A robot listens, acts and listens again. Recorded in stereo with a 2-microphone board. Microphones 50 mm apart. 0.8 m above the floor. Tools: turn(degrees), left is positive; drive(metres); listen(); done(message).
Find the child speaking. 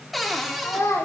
turn(degrees=90)
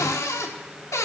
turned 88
listen()
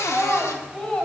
turn(degrees=15)
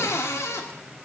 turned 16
listen()
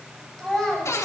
turn(degrees=10)
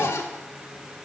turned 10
listen()
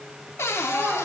done("Facing the child speaking.")